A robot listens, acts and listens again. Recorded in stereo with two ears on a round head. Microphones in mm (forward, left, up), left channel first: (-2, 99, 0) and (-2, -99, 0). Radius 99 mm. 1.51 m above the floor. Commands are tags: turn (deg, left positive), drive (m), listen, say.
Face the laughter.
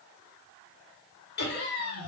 <turn deg="45"/>
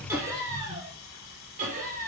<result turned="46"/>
<turn deg="-45"/>
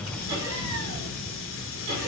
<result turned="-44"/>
<turn deg="-30"/>
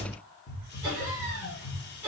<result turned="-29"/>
<turn deg="-10"/>
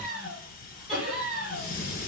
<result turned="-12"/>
<say>Found it: laughter, straight ahead, 2 to 4 m away.</say>